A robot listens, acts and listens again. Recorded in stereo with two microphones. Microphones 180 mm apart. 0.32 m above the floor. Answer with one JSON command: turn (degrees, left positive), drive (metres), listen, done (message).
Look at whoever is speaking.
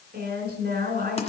{"turn": -60}
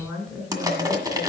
{"done": "Facing the woman speaking, 2 to 4 m away."}